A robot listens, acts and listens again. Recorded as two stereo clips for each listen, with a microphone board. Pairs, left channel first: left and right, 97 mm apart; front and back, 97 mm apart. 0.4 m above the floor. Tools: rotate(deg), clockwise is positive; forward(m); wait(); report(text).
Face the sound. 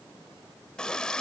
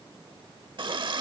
rotate(-170)
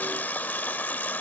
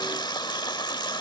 rotate(-25)
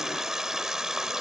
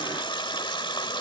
report("Facing the running tap.")